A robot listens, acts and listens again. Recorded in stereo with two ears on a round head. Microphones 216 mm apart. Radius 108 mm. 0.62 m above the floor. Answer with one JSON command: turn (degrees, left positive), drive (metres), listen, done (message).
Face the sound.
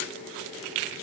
{"listen": true}
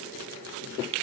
{"listen": true}
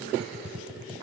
{"turn": -30}
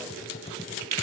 {"turn": 25}
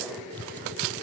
{"done": "Found it: typing on a keyboard, straight ahead."}